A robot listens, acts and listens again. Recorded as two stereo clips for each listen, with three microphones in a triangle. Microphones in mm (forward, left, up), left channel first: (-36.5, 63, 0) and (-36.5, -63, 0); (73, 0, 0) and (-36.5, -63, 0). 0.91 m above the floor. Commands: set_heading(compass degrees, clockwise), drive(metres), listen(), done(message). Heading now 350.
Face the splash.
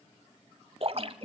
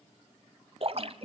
set_heading(110)
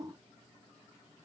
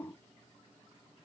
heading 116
done("Facing where the splash came from. I can't hear it now.")